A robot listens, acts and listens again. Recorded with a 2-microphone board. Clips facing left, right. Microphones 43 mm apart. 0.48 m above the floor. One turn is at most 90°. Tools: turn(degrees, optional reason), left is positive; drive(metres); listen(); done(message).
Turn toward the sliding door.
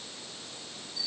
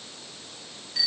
listen()
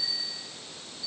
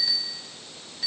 listen()
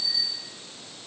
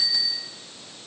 done("I can't make out a sliding door, only a bicycle bell.")